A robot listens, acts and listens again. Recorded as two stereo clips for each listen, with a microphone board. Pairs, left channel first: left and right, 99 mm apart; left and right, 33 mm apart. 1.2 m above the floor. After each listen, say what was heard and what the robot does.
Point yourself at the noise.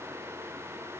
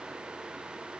Keep listening.
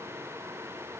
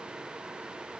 Keep listening.
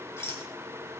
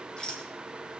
The rattle: about 25° left or 155° left. Turn 25° left.
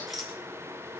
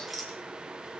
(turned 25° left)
Facing the rattle, 2 to 4 m away.